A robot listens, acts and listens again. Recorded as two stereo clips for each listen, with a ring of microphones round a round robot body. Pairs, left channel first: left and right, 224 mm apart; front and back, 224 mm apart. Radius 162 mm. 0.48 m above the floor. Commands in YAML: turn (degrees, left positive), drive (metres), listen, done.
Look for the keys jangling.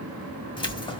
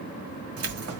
turn: 160
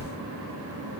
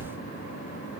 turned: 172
turn: -10
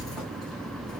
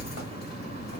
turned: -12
done: "Facing the keys jangling, 1 to 2 m away."